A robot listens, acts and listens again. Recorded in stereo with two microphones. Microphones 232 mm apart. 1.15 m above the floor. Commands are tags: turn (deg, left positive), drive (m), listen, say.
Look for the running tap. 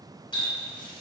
<turn deg="20"/>
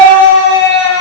<listen/>
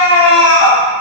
<listen/>
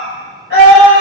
<say>I heard a running tap, but can't make it out now. It was about straight ahead or 140° left.</say>